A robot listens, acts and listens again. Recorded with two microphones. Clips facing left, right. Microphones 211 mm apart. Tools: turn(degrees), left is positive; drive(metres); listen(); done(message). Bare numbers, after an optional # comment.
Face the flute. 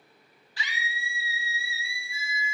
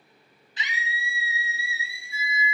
# The flute: about 75° right or 105° right.
turn(-75)
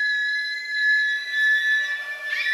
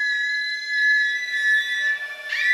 done("Facing the flute.")